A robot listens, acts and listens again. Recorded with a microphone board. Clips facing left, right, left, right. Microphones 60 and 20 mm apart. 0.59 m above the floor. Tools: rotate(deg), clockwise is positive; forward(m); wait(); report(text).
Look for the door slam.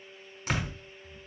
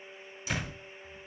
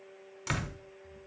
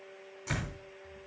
rotate(-55)
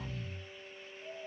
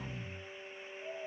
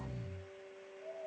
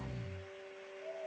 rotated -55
wait()
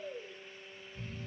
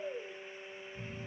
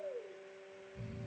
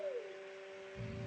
report("I heard a door slam, but can't make it out now. It was about straight ahead or 70° left.")